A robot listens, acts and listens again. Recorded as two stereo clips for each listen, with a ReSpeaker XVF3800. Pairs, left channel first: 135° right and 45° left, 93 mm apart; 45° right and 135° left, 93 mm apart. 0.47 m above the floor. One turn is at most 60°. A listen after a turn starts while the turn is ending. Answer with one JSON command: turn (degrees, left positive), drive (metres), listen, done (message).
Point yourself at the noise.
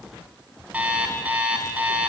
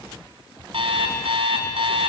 {"turn": 60}
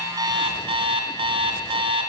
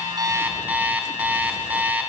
{"turn": 60}
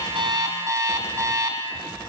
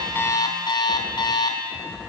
{"turn": -10}
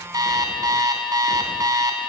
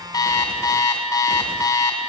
{"done": "Found it: an alarm clock, straight ahead, 2 to 4 m away."}